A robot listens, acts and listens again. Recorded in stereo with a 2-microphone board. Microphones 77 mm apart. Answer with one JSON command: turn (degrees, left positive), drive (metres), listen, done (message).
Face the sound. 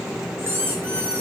{"turn": -30}
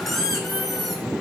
{"done": "Facing the squeak, 2 to 4 m away."}